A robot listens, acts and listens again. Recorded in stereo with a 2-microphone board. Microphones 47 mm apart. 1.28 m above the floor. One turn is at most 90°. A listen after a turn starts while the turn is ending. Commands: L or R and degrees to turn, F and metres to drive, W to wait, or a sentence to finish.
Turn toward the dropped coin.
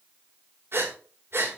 W
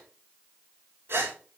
W
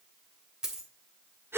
R15
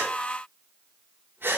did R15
W
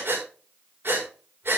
I heard a dropped coin, but can't make it out now. It was about straight ahead or 150° right.